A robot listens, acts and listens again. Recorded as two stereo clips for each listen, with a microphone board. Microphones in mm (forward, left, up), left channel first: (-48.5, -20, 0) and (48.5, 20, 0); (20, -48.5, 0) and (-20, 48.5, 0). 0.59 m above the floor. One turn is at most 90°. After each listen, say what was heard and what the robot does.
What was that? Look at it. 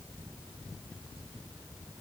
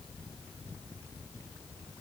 Keep listening.
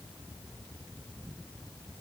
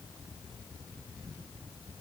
Keep listening.
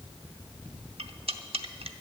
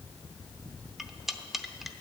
The cutlery clinking: 25° left. Turn 25° left.
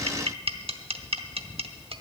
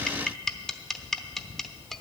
The cutlery clinking is now 20° left. Turn 20° left.
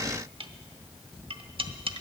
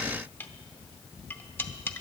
Facing the cutlery clinking, under 1 m away.